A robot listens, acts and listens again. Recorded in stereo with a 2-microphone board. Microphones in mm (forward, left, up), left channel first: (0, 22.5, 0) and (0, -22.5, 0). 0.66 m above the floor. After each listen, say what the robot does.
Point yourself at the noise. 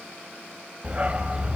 Turn 25° right.
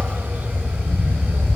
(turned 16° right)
Turn 135° right.
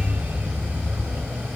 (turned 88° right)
Turn 45° right.
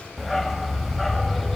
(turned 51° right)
Facing the dog barking, under 1 m away.